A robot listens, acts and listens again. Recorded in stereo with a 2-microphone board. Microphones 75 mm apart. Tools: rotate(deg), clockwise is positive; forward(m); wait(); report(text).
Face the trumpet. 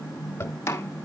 wait()
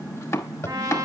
rotate(55)
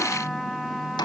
report("Facing the trumpet, 1 to 2 m away.")